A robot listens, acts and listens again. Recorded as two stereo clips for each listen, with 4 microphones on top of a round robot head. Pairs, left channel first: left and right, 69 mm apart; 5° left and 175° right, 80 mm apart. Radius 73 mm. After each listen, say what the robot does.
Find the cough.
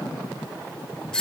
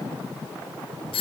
Keep listening.
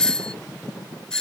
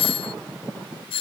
Keep listening.
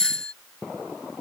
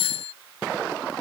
I can't make out a cough, only a doorbell.